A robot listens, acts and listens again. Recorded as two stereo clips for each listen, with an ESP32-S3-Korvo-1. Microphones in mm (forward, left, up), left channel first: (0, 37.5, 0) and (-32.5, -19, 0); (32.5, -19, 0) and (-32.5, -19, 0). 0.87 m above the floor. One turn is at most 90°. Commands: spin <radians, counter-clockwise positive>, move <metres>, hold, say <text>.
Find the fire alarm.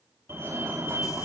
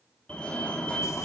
spin -1.22
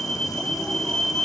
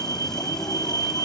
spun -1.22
spin -0.35
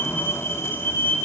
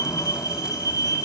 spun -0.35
say Found it: a fire alarm, straight ahead.